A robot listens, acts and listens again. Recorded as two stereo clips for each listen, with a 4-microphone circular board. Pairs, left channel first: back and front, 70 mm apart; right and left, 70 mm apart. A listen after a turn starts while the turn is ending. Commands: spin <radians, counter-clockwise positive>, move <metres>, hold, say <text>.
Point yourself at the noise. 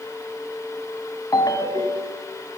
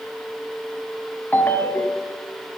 spin -2.62
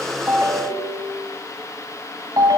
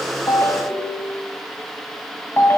spin -0.52
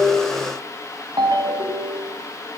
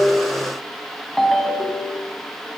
say Found it: a ringtone, straight ahead.